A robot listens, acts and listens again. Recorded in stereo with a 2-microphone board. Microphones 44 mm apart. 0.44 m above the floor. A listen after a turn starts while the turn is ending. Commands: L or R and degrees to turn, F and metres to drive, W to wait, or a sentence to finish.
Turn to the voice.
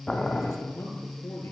L90
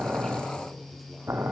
W
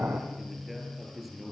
Facing the man speaking, over 4 m away.